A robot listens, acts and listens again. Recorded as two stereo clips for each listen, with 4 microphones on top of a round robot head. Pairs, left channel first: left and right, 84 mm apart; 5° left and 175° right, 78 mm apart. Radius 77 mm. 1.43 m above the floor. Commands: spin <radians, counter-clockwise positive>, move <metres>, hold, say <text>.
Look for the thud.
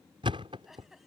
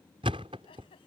spin -2.36
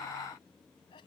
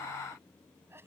say I heard a thud from this way, but can't make it out now.